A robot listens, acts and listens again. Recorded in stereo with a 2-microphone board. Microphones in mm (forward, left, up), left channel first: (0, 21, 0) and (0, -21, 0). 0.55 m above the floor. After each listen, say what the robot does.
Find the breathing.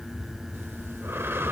Turn 70° right.
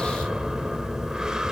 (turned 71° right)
Turn 15° right.
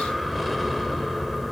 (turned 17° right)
Found it: breathing, straight ahead, 1 to 2 m away.